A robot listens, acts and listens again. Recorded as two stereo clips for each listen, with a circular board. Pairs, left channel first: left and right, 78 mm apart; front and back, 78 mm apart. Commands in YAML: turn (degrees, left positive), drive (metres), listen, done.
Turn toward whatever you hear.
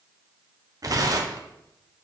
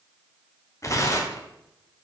turn: -50
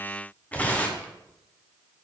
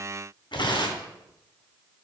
turn: 15
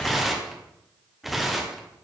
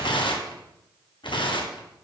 done: "Found it: tearing paper, straight ahead."